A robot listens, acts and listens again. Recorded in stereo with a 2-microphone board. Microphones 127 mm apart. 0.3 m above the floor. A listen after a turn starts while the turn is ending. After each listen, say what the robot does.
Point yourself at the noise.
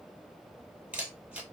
Turn 30° right.
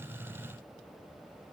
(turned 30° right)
Keep listening.
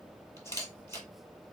Turn 20° left.
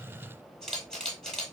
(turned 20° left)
Facing the camera shutter.